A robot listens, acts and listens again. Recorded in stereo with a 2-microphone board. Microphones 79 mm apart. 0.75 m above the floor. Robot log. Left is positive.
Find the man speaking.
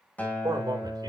note: The man speaking: about 50° right or 130° right.
cmd yaw -50
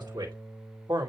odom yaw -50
note: So it is at 60° right.
cmd yaw -60
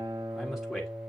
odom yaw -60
end: Found it: a man speaking, straight ahead.